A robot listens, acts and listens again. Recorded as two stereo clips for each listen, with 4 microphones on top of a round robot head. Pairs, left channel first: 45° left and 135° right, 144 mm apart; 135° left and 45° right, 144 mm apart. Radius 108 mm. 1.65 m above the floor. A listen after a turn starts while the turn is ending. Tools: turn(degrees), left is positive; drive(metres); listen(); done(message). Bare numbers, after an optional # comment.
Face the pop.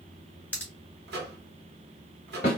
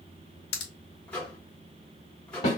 # The pop: 125° left.
turn(125)
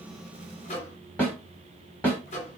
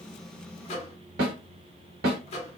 done("I heard a pop from this way, but can't make it out now.")